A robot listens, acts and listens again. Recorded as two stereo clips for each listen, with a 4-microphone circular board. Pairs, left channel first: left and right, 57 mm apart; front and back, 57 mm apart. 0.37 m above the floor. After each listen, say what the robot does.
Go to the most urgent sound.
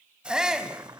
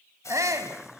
Turn 165° right.
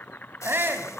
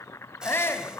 Turn 45° right.
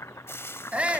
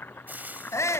Turn 25° right.
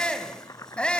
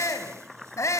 Turn 20° left.
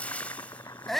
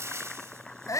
Drive 1.0 m forward.
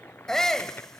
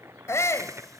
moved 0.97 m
Turn 10° left.
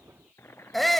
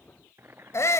Drive 1.0 m forward.
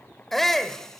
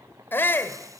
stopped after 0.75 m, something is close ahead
Turn 10° left.
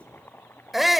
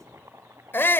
I am next to the shout.